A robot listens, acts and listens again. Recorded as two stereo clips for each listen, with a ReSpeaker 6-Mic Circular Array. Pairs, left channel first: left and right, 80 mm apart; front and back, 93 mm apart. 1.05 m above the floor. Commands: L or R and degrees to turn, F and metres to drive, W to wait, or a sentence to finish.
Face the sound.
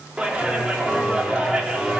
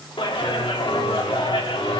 R10
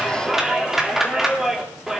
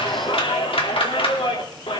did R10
Found it: a clap, straight ahead, 2 to 4 m away.